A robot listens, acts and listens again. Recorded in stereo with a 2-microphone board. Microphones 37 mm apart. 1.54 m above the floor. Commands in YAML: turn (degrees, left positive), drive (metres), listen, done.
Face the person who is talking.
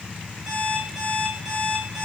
listen: true
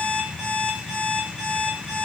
listen: true
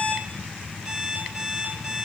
done: "I can't make out anyone speaking, only an alarm clock."